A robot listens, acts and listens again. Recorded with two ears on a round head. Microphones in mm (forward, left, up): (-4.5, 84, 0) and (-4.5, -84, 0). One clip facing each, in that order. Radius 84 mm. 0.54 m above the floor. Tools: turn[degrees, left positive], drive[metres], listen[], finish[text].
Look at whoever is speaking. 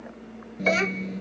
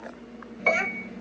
Thought: The child speaking: about 55° left or 125° left.
Action: turn[55]
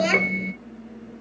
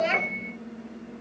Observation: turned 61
Thought: So it is at 65° left.
Action: turn[65]
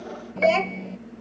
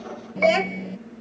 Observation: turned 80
Thought: The child speaking is now 10° right.
Action: turn[-10]
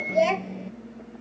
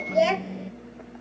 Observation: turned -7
Action: finish[Found it: a child speaking, straight ahead.]